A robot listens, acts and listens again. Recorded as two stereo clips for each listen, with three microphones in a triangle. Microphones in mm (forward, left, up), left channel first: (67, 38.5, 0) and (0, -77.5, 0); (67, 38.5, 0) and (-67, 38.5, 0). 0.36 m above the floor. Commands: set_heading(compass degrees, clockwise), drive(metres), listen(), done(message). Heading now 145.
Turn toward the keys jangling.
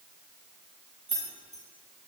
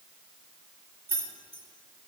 set_heading(35)
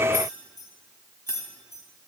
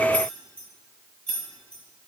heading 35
set_heading(45)
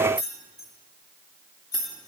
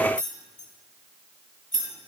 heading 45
done("Facing the keys jangling.")